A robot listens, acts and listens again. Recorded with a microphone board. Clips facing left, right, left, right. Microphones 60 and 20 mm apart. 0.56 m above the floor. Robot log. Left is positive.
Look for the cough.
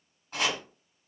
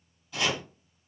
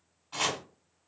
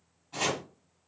cmd idle
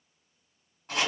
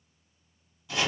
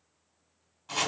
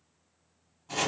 cmd idle
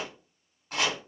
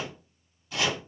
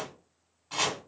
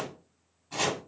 end: I can't make out a cough, only chopping.